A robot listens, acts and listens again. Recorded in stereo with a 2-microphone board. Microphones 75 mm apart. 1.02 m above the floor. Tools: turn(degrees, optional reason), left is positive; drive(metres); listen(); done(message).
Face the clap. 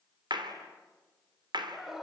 turn(degrees=-90)
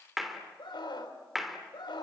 done("Facing the clap.")